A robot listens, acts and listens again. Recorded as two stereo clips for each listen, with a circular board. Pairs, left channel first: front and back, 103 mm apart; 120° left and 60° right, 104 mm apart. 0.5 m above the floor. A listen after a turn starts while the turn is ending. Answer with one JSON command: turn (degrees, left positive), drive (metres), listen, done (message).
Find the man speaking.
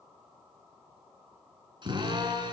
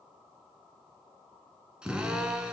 {"listen": true}
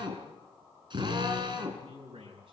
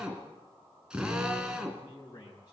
{"turn": 170}
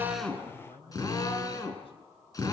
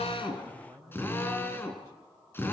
{"done": "Found it: a man speaking, straight ahead, over 4 m away."}